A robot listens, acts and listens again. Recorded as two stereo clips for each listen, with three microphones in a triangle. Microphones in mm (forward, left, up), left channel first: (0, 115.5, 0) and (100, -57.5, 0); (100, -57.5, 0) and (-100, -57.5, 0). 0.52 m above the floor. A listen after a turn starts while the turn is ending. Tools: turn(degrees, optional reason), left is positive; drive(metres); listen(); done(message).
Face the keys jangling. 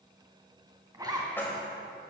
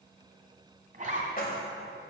turn(degrees=40, reason="The keys jangling: 40° left.")
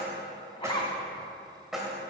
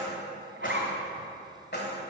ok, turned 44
turn(degrees=30, reason="The keys jangling is now 30° left.")
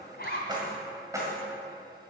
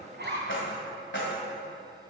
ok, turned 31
turn(degrees=15, reason="The keys jangling is now 15° left.")
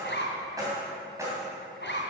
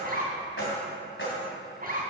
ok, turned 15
turn(degrees=15, reason="The keys jangling is now 15° left.")
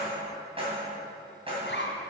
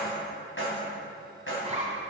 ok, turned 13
done("Facing the keys jangling, 2 to 4 m away.")